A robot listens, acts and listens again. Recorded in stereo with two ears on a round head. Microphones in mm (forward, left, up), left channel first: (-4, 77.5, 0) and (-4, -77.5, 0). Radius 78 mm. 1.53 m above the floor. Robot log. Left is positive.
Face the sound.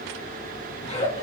note: The giggle: about 35° left or 145° left.
cmd yaw +35
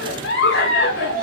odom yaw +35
note: So it is at 110° left.
cmd yaw +110
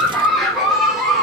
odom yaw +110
end: Facing the giggle.